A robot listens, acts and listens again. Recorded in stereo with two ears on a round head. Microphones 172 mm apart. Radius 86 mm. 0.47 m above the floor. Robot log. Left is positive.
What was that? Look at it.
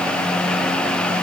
cmd idle
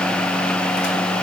cmd idle
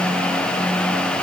end: I can't make out anything to turn to.